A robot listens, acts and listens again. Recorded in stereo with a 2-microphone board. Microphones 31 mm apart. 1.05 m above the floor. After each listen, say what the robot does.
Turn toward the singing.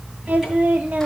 Turn 60° right.
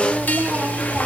Turn 70° right.
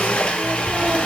Keep listening.
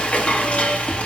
Keep listening.
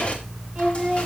Turn 25° right.
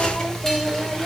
Keep listening.
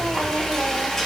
Keep listening.
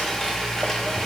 Facing where the singing came from. I can't hear it now.